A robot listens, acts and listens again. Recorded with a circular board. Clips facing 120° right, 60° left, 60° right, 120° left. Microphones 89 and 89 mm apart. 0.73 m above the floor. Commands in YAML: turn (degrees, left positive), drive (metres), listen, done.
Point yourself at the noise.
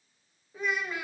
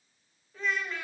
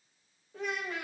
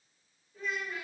turn: -40
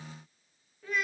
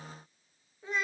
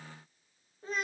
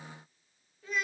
done: "Found it: a child speaking, straight ahead."